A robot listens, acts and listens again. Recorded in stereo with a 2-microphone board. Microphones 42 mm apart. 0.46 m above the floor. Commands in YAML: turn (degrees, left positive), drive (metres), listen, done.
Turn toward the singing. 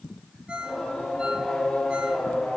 turn: 30
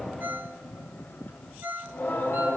turn: 140
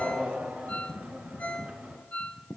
turn: -25
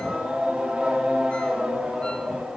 turn: -15
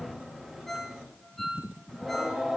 done: "Facing the singing, over 4 m away."